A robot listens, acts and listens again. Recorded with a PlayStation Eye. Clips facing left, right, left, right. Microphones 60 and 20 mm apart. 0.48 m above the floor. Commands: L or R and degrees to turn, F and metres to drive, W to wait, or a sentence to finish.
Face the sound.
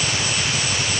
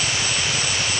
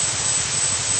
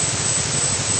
W
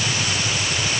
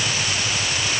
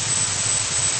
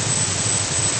W
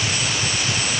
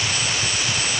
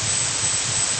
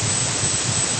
I can't make out anything.